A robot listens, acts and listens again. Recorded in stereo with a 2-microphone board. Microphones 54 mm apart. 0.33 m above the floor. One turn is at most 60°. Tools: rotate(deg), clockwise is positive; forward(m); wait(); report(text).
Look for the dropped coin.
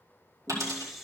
rotate(60)
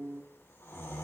rotate(30)
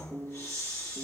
report("I heard a dropped coin from this way, but can't make it out now.")